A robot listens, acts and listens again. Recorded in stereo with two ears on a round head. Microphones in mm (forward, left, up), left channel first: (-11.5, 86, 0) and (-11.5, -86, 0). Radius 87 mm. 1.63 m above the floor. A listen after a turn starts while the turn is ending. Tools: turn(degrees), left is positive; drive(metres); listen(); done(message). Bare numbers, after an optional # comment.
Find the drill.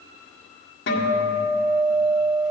listen()
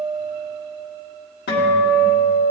listen()
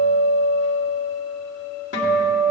done("I can't make out a drill to turn to.")